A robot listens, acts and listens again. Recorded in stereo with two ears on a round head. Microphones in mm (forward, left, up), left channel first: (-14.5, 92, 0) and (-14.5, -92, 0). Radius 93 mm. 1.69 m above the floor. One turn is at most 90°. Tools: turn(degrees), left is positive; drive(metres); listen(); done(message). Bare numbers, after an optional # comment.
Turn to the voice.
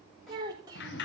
# The child speaking: about 20° right or 160° right.
turn(-20)
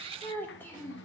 # So it is at 10° left.
turn(10)
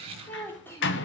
# The child speaking is now 10° left.
turn(10)
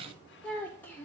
# The child speaking is now 10° left.
turn(10)
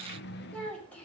# The child speaking is now 10° left.
turn(10)
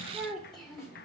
done("Facing the child speaking.")